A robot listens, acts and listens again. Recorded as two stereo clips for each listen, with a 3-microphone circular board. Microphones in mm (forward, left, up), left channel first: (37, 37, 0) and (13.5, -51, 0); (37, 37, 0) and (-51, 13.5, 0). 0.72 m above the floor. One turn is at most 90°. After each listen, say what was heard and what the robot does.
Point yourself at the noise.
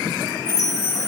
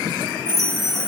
The chime: 70° right. Turn 70° right.
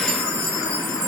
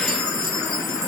Found it: a chime, straight ahead, 2 to 4 m away.